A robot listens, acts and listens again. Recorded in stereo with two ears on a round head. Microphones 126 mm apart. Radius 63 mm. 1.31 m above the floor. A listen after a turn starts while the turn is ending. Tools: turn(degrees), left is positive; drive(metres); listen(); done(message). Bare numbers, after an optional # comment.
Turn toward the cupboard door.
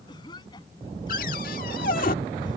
# The cupboard door: about 65° left or 115° left.
turn(65)
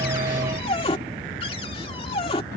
# So it is at 40° left.
turn(40)
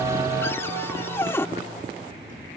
# The cupboard door is now 20° left.
turn(20)
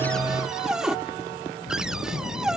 done("Facing the cupboard door.")